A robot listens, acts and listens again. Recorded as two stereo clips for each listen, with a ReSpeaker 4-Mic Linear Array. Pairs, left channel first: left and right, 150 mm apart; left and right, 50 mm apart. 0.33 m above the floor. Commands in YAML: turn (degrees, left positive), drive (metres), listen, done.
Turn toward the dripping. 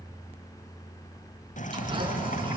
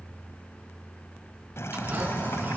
turn: 60
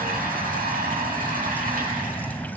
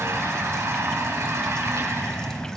turn: 15
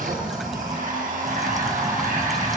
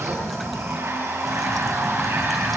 done: "Facing the dripping."